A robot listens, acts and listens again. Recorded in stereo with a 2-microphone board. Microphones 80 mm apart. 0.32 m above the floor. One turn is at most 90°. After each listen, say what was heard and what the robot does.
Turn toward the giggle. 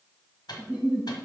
Turn 30° right.
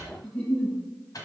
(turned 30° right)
So it is at 20° left. Turn 20° left.
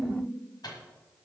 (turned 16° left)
Found it: a giggle, straight ahead.